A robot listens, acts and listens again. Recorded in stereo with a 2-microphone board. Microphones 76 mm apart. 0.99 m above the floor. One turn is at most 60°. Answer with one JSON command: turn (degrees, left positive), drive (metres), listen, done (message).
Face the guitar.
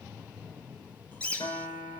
{"turn": 60}
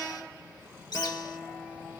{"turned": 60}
{"done": "Found it: a guitar, straight ahead, over 4 m away."}